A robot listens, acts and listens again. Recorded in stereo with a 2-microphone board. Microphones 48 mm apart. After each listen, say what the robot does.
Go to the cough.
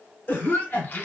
Turn 55° left.
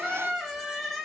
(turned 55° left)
Keep listening.
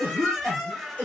Turn 50° left.
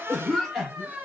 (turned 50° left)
Drive 1.0 m forward.
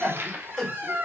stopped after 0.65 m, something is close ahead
Arrived at the cough, straight ahead.